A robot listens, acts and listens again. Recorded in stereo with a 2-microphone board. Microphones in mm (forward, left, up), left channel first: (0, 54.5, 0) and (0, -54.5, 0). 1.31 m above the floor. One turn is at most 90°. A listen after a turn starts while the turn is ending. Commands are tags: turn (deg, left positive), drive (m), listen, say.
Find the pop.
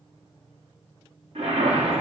<listen/>
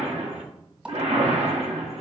<turn deg="-30"/>
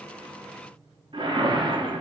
<listen/>
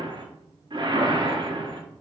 <say>I heard a pop, but can't make it out now. It was about 20° left or 140° right.</say>